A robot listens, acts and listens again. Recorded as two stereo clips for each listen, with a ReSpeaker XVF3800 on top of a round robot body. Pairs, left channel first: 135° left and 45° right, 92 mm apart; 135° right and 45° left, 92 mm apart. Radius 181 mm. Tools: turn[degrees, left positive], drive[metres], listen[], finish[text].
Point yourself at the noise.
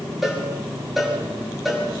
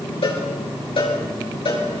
Thought: The cowbell: 135° right.
Action: turn[-135]
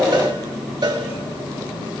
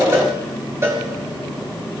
Thought: The cowbell is now 15° right.
Action: turn[-15]
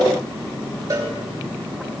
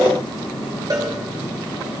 Action: finish[Facing the cowbell, over 4 m away.]